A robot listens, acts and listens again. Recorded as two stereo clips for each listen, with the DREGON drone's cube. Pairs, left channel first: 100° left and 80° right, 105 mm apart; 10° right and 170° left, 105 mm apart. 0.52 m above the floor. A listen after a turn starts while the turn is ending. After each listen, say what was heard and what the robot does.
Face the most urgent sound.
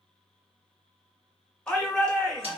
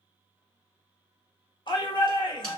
The shout: 20° left. Turn 20° left.
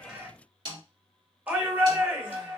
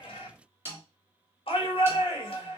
The shout is now 10° right. Turn 10° right.
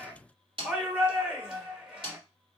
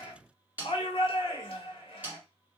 Found it: a shout, straight ahead, 1 to 2 m away.